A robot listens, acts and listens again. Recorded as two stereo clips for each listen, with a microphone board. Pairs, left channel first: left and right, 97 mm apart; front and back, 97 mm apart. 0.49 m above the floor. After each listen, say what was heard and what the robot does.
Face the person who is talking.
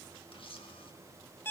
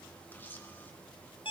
Keep listening.
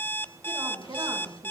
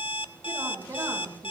The woman speaking: 135° right. Turn 135° right.
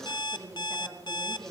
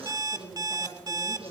The woman speaking is now 30° right. Turn 30° right.
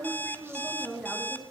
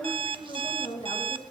Found it: a woman speaking, straight ahead.